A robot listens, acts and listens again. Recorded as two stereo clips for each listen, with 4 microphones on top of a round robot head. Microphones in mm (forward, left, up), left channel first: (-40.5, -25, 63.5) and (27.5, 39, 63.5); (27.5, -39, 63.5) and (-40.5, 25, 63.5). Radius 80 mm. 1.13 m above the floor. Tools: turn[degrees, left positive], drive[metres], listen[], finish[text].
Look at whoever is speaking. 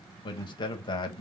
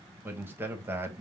Thought: The man speaking: 160° right.
Action: turn[-160]
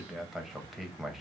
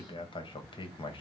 Thought: The man speaking is now 40° right.
Action: turn[-40]
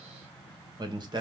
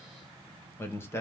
Thought: The man speaking is now 15° left.
Action: turn[15]
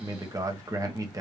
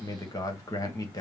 Action: finish[Facing the man speaking, 1 to 2 m away.]